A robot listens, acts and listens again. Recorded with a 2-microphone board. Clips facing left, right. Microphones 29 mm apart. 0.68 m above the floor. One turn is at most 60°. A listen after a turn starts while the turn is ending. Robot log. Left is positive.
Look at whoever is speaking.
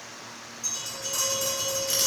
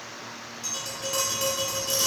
cmd idle
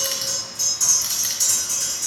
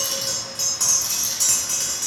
cmd idle
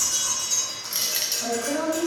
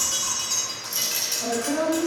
cmd yaw -30
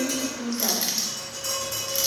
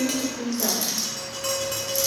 note: So it is at 140° right.
cmd yaw -60
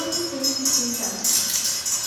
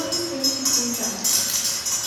note: The woman speaking is now 105° right.
cmd yaw -60
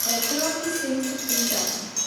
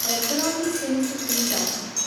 note: The woman speaking is now 45° right.
cmd yaw -45
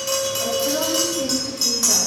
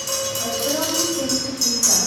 note: The woman speaking is now 10° right.
cmd yaw -10
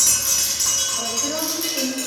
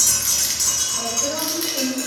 end: Facing the woman speaking.